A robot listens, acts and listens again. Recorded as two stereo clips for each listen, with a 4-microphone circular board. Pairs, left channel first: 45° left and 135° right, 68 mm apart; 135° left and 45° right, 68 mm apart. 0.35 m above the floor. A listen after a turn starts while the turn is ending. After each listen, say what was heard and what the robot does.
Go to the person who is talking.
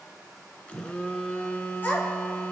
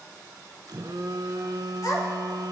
The child speaking: 105° left. Turn 105° left.
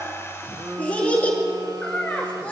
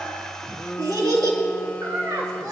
The child speaking is now 25° right. Turn 25° right.
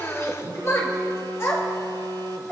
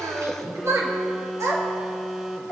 Drive 1.0 m forward.
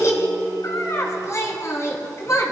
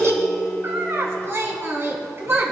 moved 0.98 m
Drive 1.0 m forward.
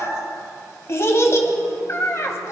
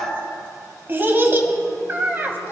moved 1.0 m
Drive 1.0 m forward.
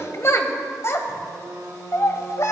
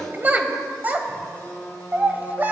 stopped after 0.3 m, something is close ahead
The child speaking is now 10° left. Turn 10° left.
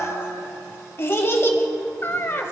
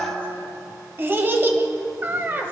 I am next to the child speaking.